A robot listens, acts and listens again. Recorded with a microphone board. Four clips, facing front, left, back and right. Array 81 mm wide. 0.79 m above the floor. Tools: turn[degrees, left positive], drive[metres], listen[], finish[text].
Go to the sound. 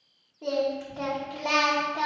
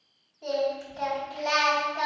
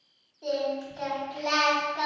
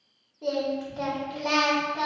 Thought: The singing: 25° right.
Action: turn[-25]
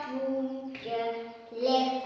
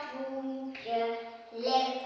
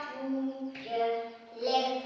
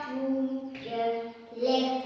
Action: drive[1.0]
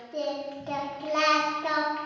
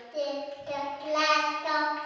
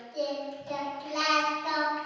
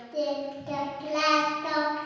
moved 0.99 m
Action: drive[1.0]
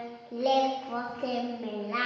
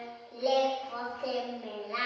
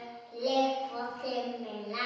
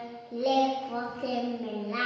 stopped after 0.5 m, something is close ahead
Thought: The singing is now 10° right.
Action: turn[-10]
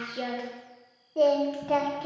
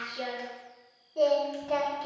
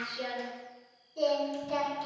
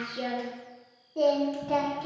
Action: finish[I am next to the singing.]